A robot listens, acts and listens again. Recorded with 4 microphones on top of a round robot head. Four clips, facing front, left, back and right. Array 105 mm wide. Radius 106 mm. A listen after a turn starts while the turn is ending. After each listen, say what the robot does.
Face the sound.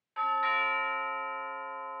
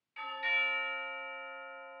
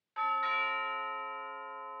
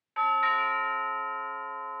Turn 85° right.
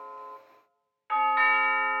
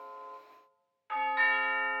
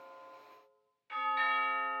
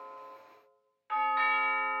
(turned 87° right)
Facing the doorbell.